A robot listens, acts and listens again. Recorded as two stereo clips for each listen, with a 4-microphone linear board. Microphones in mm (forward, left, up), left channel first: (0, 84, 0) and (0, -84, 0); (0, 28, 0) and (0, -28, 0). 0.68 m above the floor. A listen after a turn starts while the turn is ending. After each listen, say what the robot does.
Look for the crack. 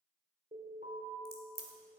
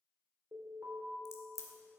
Turn 70° left.
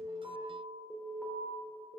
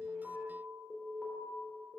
Keep listening.
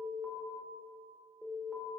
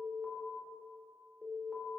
I heard a crack, but can't make it out now. It was about straight ahead or 40° left.